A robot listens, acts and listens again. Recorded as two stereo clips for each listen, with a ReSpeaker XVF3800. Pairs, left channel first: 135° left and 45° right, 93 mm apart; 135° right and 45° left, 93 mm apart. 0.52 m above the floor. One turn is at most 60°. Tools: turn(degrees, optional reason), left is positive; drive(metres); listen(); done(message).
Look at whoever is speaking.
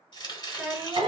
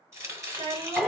turn(degrees=35, reason="The child speaking: 35° left.")
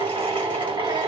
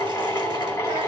listen()
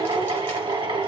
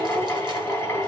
listen()
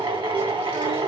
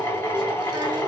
done("Facing where the child speaking came from. I can't hear it now.")